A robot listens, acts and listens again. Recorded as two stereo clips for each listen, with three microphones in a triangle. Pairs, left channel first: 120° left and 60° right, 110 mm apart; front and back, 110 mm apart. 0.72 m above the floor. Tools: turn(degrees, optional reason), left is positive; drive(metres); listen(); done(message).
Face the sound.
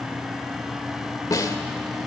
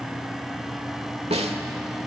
turn(degrees=175, reason="The snare drum: 175° left.")
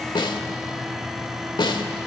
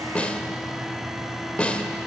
turn(degrees=80, reason="The snare drum is now 80° left.")
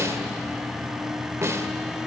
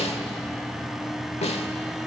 done("Found it: a snare drum, straight ahead, 1 to 2 m away.")